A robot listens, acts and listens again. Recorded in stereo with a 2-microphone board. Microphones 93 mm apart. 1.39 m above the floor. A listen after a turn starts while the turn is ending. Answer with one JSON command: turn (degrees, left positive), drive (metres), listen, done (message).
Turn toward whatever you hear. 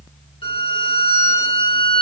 {"turn": 75}
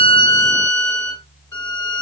{"turn": 30}
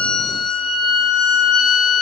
{"done": "Facing the violin, 1 to 2 m away."}